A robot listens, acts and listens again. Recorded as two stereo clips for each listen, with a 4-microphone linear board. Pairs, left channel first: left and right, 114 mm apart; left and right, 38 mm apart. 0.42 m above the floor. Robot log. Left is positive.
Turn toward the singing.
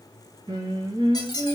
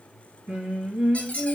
note: The singing: about 35° right or 145° right.
cmd yaw -35
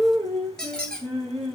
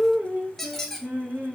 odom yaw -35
note: So it is at 110° right.
cmd yaw -110
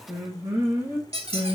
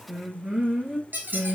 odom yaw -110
note: The singing is now 30° right.
cmd yaw -30
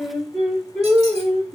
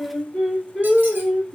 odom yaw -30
end: Facing the singing.